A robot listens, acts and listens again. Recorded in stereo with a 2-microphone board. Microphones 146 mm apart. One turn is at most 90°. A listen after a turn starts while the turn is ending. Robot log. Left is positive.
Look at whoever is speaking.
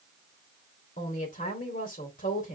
note: The woman speaking: about 70° left or 110° left.
cmd yaw +70
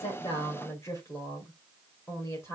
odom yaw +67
note: So it is at 20° left.
cmd yaw +20
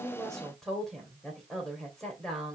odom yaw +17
end: Found it: a woman speaking, straight ahead, 2 to 4 m away.